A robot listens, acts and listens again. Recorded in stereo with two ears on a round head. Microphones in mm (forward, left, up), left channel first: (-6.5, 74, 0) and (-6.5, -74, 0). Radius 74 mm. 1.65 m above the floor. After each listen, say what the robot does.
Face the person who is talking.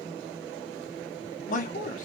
Turn 50° left.
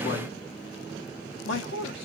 Turn 80° left.
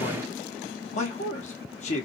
Turn 40° left.
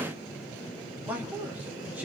Turn 10° right.
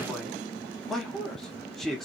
Facing the man speaking.